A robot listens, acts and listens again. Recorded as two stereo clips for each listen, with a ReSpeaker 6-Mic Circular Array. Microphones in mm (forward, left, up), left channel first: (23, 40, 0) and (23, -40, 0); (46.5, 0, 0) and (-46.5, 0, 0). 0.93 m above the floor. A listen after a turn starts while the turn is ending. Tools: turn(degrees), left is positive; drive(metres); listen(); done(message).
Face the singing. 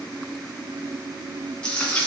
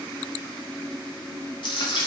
listen()
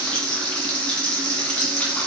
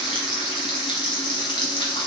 listen()
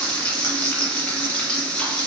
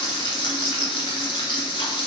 done("I can't make out singing, only frying.")